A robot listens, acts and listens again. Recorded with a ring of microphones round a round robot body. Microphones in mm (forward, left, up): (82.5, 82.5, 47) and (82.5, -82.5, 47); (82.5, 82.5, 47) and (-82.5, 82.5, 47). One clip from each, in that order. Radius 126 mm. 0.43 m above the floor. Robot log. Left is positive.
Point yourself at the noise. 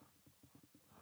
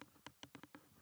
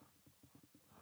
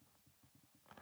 cmd idle
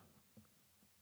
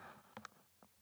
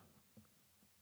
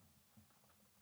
cmd idle
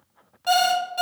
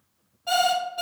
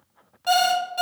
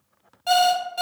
note: The alarm clock: 100° left.
cmd yaw +100
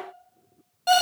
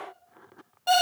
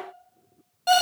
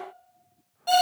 note: The alarm clock is now 25° left.
cmd yaw +25
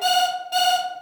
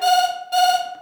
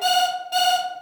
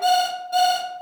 end: Facing the alarm clock, 1 to 2 m away.